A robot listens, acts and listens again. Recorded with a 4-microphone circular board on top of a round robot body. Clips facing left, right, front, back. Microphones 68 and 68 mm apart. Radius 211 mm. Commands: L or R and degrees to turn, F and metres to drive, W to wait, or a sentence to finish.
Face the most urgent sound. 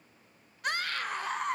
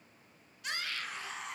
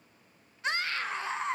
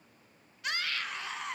L60
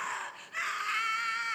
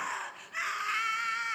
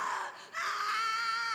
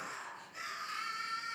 Facing the scream, 2 to 4 m away.